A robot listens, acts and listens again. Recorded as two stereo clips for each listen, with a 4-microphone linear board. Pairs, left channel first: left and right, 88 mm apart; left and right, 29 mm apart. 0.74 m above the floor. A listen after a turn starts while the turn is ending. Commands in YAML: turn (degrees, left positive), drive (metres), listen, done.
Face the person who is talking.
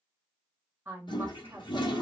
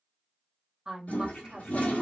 turn: -25
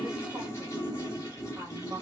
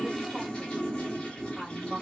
turn: -125
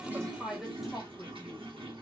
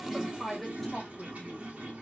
done: "Facing the woman speaking."